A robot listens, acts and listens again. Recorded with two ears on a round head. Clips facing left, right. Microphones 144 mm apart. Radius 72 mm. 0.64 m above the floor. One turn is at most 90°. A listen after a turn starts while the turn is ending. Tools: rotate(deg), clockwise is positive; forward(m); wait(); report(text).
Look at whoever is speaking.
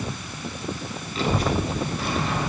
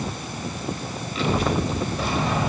rotate(-45)
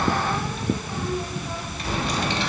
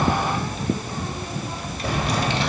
rotate(-65)
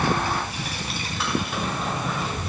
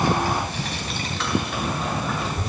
report("Found it: a child speaking, straight ahead.")